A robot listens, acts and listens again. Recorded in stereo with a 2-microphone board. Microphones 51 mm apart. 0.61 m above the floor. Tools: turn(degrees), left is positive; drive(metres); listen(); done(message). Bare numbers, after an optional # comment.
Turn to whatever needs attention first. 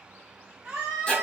# The scream: about 30° right or 150° right.
turn(-30)
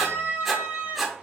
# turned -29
# So it is at 120° right.
turn(-120)
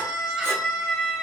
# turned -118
done("Facing the scream.")